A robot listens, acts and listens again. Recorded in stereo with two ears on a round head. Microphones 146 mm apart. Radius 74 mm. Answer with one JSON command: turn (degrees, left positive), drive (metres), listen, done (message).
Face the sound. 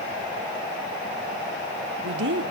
{"turn": -75}
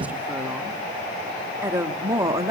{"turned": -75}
{"turn": -20}
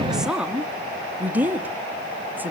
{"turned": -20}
{"turn": -10}
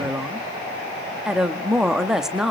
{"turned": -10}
{"done": "Found it: a woman speaking, straight ahead."}